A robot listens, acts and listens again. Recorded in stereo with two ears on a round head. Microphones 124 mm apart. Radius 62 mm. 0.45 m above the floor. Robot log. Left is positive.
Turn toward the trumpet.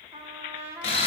note: The trumpet: about 20° right or 160° right.
cmd yaw -20
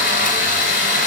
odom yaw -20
cmd idle
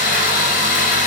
cmd idle
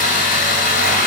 end: I heard a trumpet, but can't make it out now. It was about straight ahead or 140° right.